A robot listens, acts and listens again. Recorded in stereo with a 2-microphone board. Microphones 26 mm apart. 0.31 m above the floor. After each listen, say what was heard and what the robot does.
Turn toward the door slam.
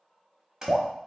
The door slam: about 25° right or 155° right. Turn 25° right.
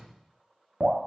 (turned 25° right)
Found it: a door slam, straight ahead.